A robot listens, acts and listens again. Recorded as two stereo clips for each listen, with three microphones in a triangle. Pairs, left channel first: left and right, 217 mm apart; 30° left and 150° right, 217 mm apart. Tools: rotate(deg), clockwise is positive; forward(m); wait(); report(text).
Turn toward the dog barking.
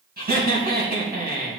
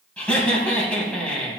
wait()
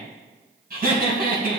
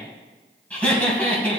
wait()
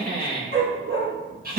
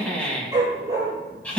rotate(75)
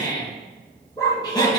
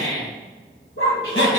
rotate(-15)
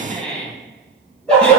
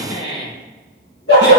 report("Facing the dog barking.")